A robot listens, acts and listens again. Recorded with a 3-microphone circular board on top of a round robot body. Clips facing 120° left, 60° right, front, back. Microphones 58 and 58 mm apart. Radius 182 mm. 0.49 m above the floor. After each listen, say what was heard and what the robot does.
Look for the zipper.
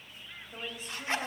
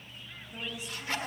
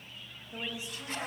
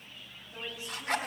The zipper: 175° right. Turn 175° right.
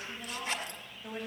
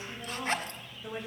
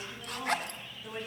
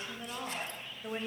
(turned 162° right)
The zipper is now 10° right. Turn 10° right.
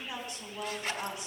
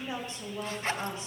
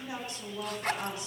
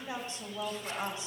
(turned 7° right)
Found it: a zipper, straight ahead.